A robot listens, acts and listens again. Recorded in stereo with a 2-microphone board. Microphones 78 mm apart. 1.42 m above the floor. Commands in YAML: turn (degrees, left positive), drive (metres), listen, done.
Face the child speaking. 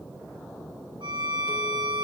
listen: true
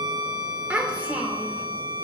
turn: -20
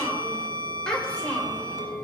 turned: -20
turn: 15
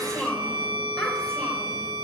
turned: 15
turn: 10
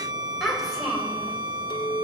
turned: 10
done: "Found it: a child speaking, straight ahead."